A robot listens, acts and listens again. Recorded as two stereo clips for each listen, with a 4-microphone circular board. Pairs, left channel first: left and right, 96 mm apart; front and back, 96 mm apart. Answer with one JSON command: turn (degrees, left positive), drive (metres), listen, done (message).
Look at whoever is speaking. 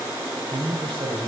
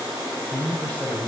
{"turn": -75}
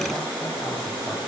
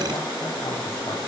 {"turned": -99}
{"turn": 25}
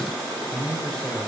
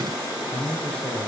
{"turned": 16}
{"turn": 10}
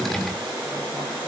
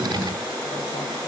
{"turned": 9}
{"listen": true}
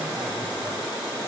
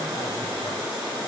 {"listen": true}
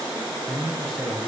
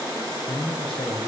{"done": "Facing the man speaking."}